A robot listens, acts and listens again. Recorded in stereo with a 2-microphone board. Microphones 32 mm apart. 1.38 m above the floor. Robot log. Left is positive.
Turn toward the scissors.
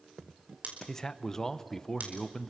note: The scissors: about 60° right or 120° right.
cmd yaw -60
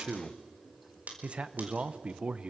note: So it is at 60° right.
cmd yaw -60
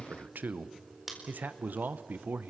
end: Facing the scissors, over 4 m away.